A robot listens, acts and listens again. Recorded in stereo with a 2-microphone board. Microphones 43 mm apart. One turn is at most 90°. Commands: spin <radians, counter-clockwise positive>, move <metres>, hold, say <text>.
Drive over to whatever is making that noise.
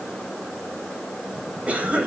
spin -0.52
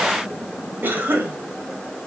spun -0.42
spin -1.57
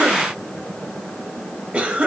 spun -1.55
spin -0.52
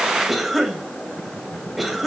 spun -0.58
move 1.0
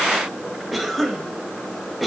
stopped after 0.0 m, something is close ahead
say Blocked. The cough is further on, straight ahead.